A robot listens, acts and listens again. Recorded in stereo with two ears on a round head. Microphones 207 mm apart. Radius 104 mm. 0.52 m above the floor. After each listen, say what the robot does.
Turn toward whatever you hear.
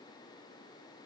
Keep listening.
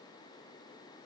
Keep listening.
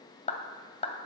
Turn 30° left.
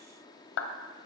Turn 115° left.
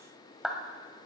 Facing the clap.